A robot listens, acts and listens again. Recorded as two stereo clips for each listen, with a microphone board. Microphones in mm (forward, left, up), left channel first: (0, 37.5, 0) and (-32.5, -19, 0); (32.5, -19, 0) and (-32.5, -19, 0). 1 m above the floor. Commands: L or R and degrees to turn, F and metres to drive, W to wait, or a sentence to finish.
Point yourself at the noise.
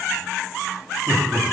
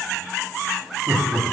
L150
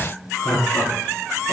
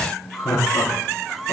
L25
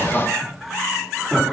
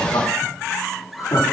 R30
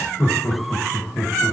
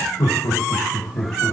Facing the laughter, 2 to 4 m away.